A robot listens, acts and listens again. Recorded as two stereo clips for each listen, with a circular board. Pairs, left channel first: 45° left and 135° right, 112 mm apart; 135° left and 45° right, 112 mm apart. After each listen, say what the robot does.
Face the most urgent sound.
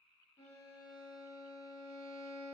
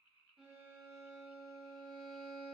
Keep listening.
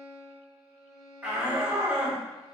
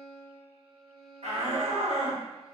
Turn 55° right.
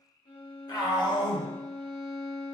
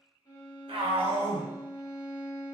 Turn 10° right.
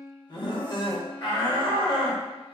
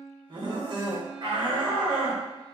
Facing the shout.